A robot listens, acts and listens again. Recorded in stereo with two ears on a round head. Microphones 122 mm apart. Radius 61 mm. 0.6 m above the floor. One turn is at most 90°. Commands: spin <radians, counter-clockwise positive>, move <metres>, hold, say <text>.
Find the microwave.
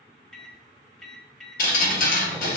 spin 0.52
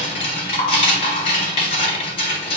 hold
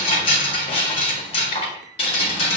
hold
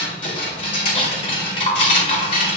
say I heard a microwave, but can't make it out now. It was about 25° right or 145° left.